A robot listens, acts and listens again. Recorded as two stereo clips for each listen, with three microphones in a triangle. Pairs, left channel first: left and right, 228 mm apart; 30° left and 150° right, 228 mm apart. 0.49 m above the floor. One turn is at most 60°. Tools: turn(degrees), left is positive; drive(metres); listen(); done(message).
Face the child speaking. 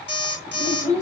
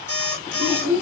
turn(degrees=-60)
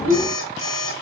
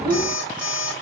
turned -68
turn(degrees=-60)
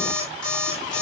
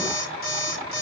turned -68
turn(degrees=-30)
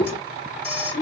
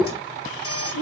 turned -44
turn(degrees=10)
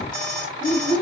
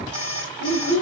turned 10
done("Facing the child speaking, 1 to 2 m away.")